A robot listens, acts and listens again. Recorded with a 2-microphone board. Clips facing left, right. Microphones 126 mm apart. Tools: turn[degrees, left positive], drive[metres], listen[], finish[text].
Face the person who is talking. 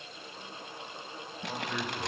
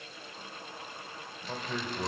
Action: turn[-30]
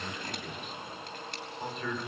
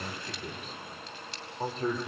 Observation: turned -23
Thought: So it is at 145° right.
Action: turn[-145]
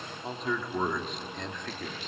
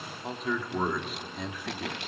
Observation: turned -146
Thought: The man speaking is now 10° right.
Action: turn[-10]
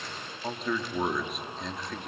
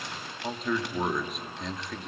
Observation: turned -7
Action: finish[Facing the man speaking.]